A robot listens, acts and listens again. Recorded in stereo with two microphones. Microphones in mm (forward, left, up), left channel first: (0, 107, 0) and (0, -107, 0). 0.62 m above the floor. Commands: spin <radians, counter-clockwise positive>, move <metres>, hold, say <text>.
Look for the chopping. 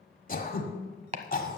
spin -0.61
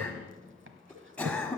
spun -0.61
hold
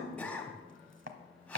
spin -1.92
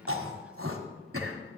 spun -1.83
say Found it: chopping, straight ahead.